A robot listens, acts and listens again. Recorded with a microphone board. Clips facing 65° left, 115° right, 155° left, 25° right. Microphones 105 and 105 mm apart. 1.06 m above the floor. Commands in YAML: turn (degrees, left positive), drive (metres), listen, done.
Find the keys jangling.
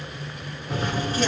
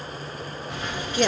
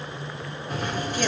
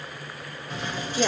turn: 120
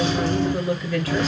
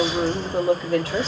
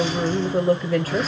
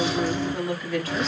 turn: 70
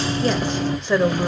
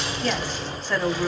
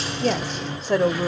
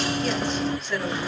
turn: 30
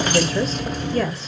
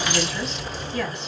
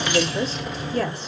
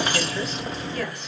turn: 35
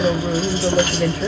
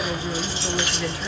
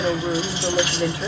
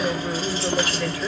turn: 30
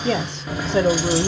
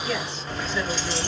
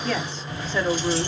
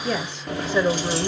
turn: -10
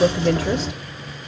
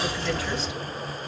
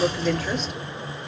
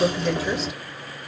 done: "Facing the keys jangling, 1 to 2 m away."